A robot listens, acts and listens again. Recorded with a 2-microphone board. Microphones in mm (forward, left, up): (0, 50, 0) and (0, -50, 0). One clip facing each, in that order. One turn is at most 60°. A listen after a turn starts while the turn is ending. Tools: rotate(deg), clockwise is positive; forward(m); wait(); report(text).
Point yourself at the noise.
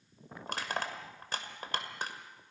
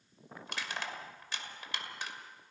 rotate(-45)
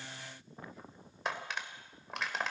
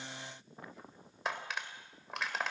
report("Found it: crushing, straight ahead, 2 to 4 m away.")